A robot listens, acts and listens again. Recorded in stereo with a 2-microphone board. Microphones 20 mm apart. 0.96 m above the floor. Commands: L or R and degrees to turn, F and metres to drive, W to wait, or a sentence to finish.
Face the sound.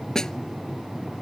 L35
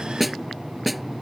Found it: a snare drum, straight ahead.